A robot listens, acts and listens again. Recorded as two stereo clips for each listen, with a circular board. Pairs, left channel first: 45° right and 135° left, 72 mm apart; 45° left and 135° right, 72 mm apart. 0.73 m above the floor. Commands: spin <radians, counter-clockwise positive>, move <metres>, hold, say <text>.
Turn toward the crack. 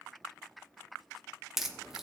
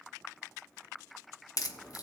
spin 0.87
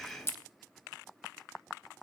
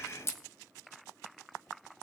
say Facing the crack, 1 to 2 m away.